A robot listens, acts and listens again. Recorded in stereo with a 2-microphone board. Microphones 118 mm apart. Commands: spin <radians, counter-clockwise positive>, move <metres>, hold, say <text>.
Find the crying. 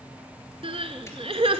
spin -0.96
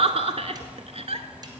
spin -1.13
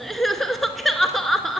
say Found it: crying, straight ahead, under 1 m away.